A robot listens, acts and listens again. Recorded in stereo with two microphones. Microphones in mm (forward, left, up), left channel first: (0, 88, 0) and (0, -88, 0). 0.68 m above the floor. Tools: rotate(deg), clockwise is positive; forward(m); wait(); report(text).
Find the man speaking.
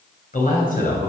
rotate(-55)
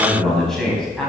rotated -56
report("Facing the man speaking.")